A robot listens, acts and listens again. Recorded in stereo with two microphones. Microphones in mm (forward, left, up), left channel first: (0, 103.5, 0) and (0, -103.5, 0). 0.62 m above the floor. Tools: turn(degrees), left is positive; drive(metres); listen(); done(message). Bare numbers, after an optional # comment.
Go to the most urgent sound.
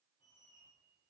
listen()
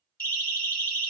# The siren: about 45° left or 135° left.
turn(45)
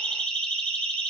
drive(1.0)
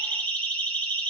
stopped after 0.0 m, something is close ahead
# The siren is now 10° left.
turn(10)
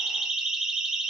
done("Blocked. The siren is further on, straight ahead.")